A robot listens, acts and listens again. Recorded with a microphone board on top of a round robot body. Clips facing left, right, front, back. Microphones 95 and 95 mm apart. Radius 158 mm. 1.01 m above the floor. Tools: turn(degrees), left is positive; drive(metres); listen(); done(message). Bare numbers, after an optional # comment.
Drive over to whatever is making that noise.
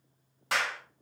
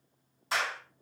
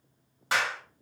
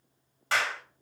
# The clap: 75° left.
turn(75)
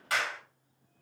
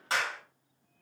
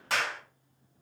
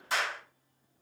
# The clap is now 30° right.
turn(-30)
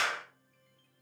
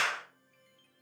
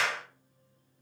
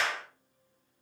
# The clap is now 20° left.
turn(20)
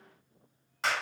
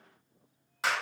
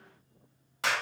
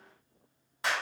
drive(1.0)
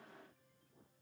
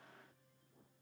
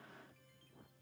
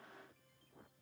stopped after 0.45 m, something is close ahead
listen()
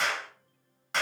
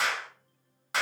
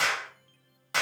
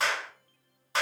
done("Something is in my way. I am facing the clap but have not reached it.")